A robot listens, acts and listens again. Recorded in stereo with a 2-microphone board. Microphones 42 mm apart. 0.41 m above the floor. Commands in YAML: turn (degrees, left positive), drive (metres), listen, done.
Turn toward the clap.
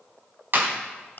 turn: -55
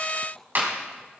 turn: -60
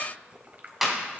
turn: -10
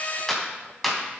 done: "Facing the clap, 2 to 4 m away."